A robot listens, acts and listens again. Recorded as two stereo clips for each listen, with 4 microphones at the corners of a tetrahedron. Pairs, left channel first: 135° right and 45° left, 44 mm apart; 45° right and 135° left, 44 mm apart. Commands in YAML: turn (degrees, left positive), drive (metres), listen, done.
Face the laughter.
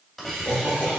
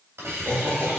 turn: 180
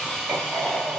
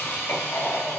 turn: -10
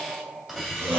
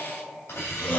done: "Found it: laughter, straight ahead."